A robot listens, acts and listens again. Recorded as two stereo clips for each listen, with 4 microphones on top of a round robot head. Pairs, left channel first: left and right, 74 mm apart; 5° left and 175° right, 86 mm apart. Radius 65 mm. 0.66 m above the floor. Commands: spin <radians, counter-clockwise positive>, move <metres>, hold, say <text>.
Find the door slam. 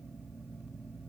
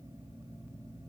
hold
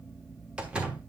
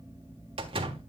spin -2.97
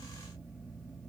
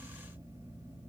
say I heard a door slam from this way, but can't make it out now.